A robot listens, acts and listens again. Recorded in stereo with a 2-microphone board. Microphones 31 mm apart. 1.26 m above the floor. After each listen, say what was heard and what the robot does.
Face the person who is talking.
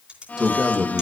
The man speaking: about 20° right or 160° right. Turn 20° right.
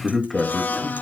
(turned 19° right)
Found it: a man speaking, straight ahead.